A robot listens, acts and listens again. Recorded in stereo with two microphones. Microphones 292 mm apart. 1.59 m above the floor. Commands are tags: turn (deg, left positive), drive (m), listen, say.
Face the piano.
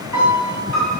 <turn deg="90"/>
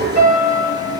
<say>Facing the piano.</say>